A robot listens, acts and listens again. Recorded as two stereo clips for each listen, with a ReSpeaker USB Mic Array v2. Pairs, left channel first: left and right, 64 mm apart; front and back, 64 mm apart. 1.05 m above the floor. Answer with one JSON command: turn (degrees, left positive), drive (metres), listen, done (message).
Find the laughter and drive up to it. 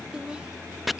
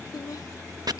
{"turn": -15}
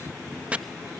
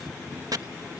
{"listen": true}
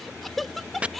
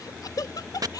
{"drive": 1.0}
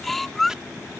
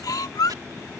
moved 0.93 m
{"drive": 1.0}
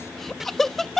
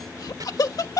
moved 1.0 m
{"drive": 1.0}
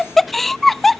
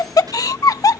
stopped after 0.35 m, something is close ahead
{"done": "I am next to the laughter."}